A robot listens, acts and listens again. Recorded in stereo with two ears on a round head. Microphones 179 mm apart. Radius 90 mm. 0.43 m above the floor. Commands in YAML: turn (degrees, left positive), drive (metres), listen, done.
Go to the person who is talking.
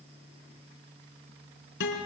listen: true
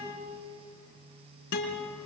listen: true
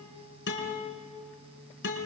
done: "I can't make out anyone speaking to turn to."